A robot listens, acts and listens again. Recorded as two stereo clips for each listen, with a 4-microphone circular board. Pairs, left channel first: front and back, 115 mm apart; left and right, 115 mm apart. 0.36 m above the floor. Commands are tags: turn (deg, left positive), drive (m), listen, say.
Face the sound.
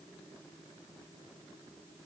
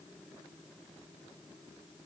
<listen/>
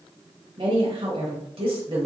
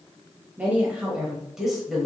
<turn deg="180"/>
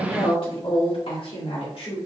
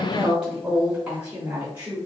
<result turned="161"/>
<turn deg="-20"/>
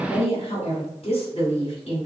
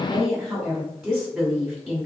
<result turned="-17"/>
<say>Facing the woman speaking.</say>